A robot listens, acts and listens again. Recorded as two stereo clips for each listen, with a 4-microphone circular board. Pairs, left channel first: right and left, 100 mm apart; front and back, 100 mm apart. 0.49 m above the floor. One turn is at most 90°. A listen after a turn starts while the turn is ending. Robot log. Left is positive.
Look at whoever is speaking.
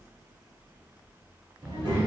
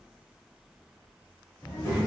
note: The child speaking: 65° left.
cmd yaw +65
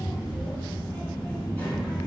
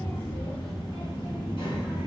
note: The child speaking is now 15° right.
cmd yaw -15
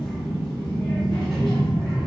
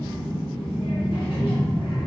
end: Found it: a child speaking, straight ahead.